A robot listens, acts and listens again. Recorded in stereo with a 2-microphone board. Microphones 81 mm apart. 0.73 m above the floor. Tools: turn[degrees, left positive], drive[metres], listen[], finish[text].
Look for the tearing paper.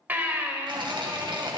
Action: turn[-90]
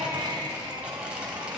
Thought: So it is at 10° right.
Action: turn[-10]
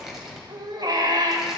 Action: finish[Facing the tearing paper, 2 to 4 m away.]